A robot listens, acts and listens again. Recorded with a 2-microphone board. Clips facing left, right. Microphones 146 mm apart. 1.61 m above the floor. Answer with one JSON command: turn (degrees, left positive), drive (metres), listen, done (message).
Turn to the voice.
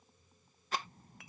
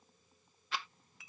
{"turn": 50}
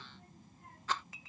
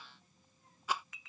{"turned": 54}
{"turn": 80}
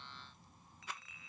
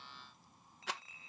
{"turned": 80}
{"done": "Facing the child speaking."}